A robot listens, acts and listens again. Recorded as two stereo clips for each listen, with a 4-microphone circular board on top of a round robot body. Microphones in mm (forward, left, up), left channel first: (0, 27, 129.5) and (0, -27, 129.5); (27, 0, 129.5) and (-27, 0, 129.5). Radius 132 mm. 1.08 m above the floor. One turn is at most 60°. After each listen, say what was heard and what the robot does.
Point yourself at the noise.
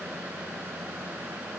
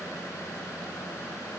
Keep listening.
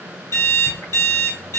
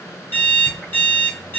The alarm clock: 55° left. Turn 55° left.
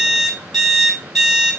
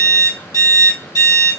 Facing the alarm clock.